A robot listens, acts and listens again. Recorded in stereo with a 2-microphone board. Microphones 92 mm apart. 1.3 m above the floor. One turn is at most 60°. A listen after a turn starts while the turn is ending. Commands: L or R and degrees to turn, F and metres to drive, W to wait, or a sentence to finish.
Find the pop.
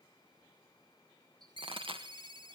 R60
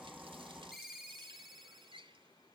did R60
W
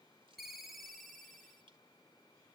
I heard a pop, but can't make it out now. It was about 10° right or 50° right.